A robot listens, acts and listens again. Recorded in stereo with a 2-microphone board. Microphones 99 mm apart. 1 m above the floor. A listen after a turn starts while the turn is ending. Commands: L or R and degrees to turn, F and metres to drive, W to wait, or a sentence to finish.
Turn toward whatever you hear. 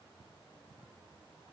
W
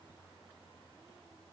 W
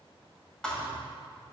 L30
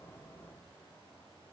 W
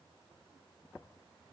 I heard a thud, but can't make it out now. It was about 20° right or 140° left.